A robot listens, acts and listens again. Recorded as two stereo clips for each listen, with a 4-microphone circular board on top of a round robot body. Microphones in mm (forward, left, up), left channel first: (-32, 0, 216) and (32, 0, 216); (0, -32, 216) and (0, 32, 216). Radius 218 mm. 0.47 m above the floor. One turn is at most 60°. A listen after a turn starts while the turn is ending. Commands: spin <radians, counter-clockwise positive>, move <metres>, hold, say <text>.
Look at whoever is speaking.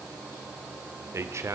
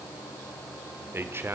spin 0.70
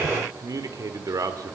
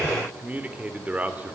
spin 0.44
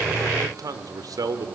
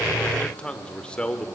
spin -0.26
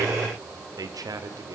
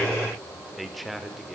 say Facing the man speaking, 2 to 4 m away.